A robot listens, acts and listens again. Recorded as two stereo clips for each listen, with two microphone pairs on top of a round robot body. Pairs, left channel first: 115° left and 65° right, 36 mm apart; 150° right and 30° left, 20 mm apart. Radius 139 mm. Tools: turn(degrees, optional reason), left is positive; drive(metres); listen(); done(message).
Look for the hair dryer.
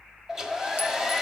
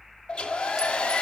turn(degrees=-145, reason="The hair dryer: 145° right.")
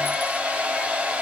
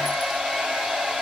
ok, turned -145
done("Found it: a hair dryer, straight ahead.")